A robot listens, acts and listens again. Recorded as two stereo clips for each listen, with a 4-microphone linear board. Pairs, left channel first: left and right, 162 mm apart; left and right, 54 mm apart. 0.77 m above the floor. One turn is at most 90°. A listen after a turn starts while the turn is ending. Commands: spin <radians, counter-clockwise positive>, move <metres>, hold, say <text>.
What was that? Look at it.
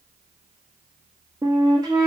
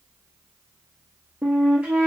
spin -0.44
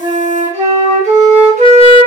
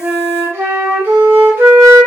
spin -1.57
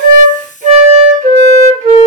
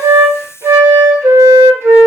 spin -0.96
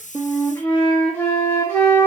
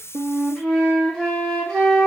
spin 0.26
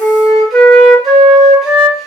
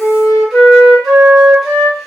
say Found it: a flute, straight ahead, under 1 m away.